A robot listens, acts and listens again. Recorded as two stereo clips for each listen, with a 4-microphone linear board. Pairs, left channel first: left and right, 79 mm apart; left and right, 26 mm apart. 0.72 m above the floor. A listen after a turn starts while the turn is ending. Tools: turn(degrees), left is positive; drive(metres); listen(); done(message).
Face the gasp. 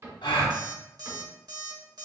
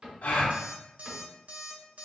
turn(degrees=90)
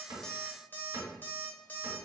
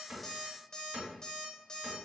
done("I heard a gasp from this way, but can't make it out now.")